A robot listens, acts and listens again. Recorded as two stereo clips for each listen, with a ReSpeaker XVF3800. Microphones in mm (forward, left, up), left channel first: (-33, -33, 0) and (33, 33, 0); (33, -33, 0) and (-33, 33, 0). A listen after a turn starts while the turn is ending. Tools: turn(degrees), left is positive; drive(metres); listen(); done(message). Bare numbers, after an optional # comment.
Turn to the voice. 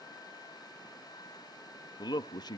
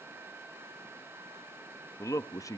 # The man speaking: 95° right.
turn(-95)
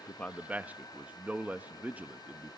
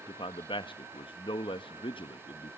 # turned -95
# The man speaking is now 25° right.
turn(-25)
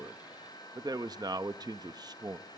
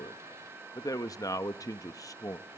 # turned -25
done("Facing the man speaking, under 1 m away.")